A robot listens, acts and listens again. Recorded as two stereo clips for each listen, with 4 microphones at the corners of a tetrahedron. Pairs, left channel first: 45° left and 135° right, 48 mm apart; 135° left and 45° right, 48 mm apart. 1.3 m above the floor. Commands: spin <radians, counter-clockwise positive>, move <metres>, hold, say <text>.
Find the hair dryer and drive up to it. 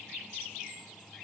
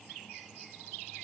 hold
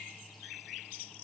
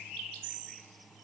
hold
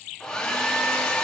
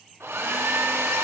spin -0.52
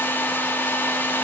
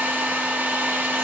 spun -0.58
move 1.0
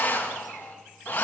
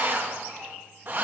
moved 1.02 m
move 1.0
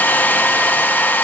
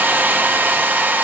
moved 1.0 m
move 1.0
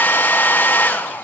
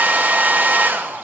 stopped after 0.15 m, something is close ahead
say I am next to the hair dryer.